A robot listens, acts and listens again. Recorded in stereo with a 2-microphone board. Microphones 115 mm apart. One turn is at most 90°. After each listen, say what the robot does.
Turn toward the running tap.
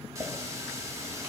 Turn 30° right.
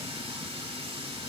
Turn 90° right.
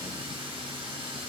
Turn 60° right.
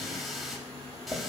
Facing the running tap, 1 to 2 m away.